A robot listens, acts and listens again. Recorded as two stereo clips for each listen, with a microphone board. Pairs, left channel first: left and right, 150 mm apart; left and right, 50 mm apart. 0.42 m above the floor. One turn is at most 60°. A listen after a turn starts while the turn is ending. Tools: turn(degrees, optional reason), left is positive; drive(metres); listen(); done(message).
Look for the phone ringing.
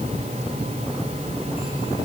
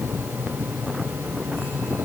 listen()
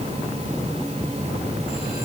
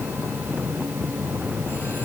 listen()
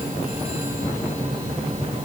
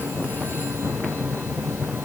done("I can't make out a phone ringing.")